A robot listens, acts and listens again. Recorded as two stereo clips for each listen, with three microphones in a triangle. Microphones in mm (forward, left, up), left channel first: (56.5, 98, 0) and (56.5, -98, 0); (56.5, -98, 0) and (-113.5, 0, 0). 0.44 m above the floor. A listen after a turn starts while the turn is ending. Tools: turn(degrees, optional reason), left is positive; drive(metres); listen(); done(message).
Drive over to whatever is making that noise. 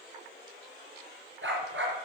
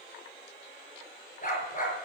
turn(degrees=-80, reason="The dog barking: 80° right.")
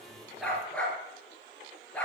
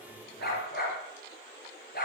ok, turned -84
drive(metres=1.0)
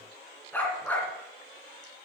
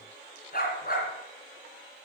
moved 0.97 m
turn(degrees=10, reason="The dog barking is now 10° left.")
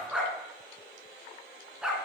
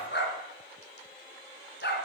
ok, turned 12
drive(metres=1.0)
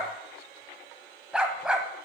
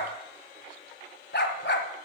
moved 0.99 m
drive(metres=1.0)
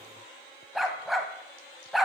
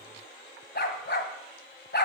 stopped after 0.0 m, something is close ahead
done("I am next to the dog barking.")